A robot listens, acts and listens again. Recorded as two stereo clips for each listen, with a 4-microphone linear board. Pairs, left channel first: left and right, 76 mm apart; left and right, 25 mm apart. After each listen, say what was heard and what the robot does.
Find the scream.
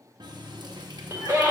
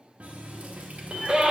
The scream: about 35° right or 145° right. Turn 35° right.
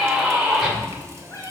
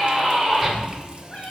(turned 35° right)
Found it: a scream, straight ahead.